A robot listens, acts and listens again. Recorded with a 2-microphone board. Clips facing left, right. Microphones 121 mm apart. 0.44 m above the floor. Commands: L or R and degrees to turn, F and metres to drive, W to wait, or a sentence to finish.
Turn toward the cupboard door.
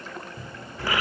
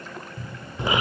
L30
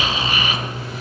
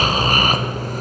W
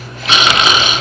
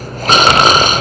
W
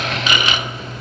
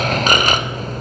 I heard a cupboard door, but can't make it out now. It was about 25° right or 145° left.